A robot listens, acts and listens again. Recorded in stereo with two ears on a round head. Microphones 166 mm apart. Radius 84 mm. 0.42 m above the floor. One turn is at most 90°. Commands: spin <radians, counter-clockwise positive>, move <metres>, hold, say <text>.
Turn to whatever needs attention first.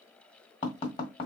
hold
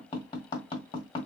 hold
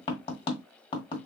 say I can't make out anything urgent to turn to.